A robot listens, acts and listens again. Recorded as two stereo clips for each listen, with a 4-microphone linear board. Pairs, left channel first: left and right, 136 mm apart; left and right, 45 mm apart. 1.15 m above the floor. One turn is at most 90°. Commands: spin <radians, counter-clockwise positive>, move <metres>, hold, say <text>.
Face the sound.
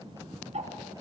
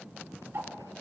spin -0.96
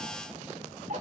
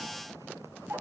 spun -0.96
spin -1.22
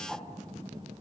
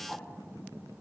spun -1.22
hold
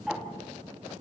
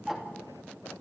say Facing the ticking, 2 to 4 m away.